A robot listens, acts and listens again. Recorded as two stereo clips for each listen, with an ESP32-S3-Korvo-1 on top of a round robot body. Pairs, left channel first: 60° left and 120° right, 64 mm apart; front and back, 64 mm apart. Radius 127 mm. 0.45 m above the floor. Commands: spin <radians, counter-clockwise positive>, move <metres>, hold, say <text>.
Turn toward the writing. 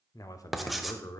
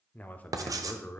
spin 2.62
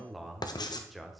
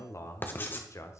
spin 1.05
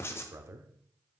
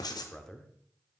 spin 0.17
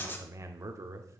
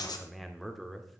say Found it: writing, straight ahead, 1 to 2 m away.